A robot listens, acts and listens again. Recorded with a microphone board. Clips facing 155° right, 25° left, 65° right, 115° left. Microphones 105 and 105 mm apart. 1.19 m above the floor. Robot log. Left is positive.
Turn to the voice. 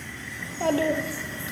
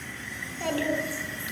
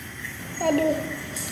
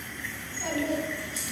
note: The child speaking: 100° right.
cmd yaw -100
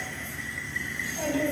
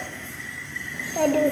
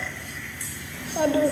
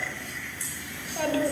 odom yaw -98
end: Facing the child speaking.